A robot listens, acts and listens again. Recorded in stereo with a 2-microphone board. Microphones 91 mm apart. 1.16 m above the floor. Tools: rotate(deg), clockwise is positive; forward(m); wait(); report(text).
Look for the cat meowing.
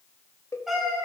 rotate(-30)
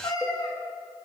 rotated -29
rotate(-135)
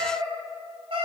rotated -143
rotate(65)
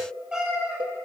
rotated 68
report("Found it: a cat meowing, straight ahead, 2 to 4 m away.")